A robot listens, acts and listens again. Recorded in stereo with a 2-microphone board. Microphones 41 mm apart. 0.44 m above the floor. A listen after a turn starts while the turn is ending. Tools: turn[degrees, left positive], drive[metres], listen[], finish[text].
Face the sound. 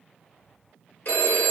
Thought: The phone ringing: about 60° left or 120° left.
Action: turn[60]
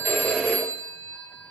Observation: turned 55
Thought: So it is at 45° left.
Action: turn[45]
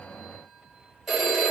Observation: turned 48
Action: finish[Facing the phone ringing, under 1 m away.]